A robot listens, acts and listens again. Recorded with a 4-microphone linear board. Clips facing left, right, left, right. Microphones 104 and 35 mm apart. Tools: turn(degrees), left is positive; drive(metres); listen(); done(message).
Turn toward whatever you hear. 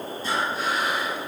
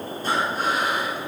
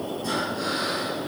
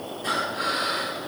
turn(degrees=-50)
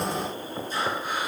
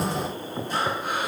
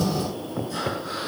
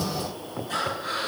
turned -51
turn(degrees=-80)
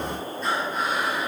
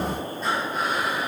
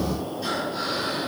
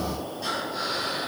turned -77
done("Found it: breathing, straight ahead.")